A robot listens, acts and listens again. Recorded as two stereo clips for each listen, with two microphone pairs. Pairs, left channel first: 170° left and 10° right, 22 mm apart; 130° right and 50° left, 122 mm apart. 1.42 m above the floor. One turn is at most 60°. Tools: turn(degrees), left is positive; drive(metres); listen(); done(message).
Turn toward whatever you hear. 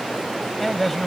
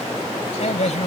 turn(degrees=-60)
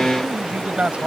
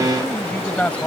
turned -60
turn(degrees=-50)
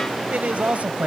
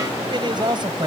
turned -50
done("Found it: a man speaking, straight ahead.")